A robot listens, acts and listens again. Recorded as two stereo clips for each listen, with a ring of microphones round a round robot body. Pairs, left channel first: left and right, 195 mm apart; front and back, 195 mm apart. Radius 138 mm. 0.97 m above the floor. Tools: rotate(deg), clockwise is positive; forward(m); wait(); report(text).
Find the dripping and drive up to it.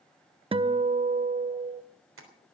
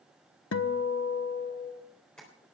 wait()
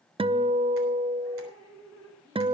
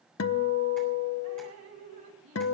rotate(165)
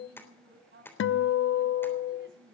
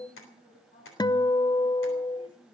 rotate(70)
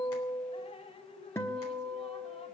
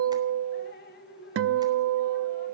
rotate(-30)
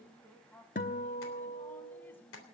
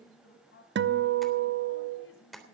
rotate(-10)
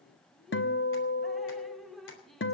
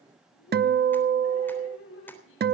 forward(1.0)
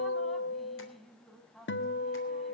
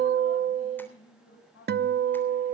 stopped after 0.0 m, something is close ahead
report("Something is in my way. I am facing the dripping but have not reached it.")